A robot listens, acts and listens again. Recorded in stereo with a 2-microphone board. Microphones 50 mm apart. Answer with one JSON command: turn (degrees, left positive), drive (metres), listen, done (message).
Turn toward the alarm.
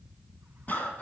{"listen": true}
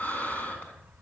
{"listen": true}
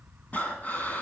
{"done": "I can't make out an alarm to turn to."}